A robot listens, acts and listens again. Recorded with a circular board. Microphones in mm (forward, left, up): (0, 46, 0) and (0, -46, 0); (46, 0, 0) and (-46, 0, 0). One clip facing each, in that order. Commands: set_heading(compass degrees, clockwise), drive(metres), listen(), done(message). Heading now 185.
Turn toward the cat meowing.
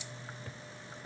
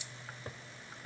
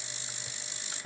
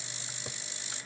listen()
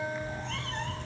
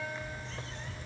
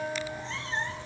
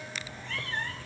set_heading(115)
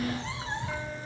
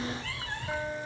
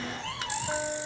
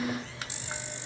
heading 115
set_heading(95)
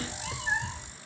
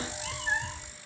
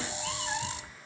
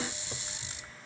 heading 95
done("Facing the cat meowing.")